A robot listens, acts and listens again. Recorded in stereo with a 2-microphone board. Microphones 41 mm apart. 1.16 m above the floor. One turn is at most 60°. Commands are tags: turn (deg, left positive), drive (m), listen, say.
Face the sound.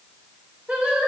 <turn deg="-30"/>
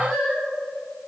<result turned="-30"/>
<say>Facing the singing, 2 to 4 m away.</say>